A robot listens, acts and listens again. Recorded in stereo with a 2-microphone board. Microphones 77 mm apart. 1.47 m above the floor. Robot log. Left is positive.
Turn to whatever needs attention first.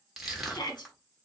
note: The shout: about 65° left or 115° left.
cmd yaw +65
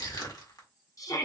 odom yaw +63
note: So it is at 50° left.
cmd yaw +50
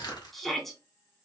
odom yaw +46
end: Found it: a shout, straight ahead.